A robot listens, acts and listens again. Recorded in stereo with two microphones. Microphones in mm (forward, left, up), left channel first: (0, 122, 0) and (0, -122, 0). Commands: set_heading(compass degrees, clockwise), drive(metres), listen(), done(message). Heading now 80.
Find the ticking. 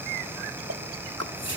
set_heading(170)
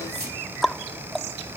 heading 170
done("Found it: ticking, straight ahead.")